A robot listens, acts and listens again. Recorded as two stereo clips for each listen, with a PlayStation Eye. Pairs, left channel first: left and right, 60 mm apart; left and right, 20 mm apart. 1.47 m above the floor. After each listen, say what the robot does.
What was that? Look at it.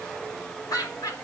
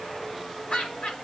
Turn 90° left.
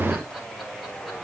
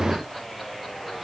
Keep listening.
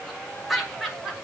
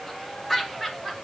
Facing the laughter, over 4 m away.